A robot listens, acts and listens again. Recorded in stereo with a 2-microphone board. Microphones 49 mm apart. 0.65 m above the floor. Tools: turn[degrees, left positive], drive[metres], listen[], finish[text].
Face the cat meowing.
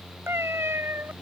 Thought: The cat meowing: about 60° right or 120° right.
Action: turn[-60]
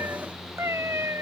Thought: So it is at 80° right.
Action: turn[-80]
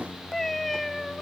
Action: finish[Found it: a cat meowing, straight ahead.]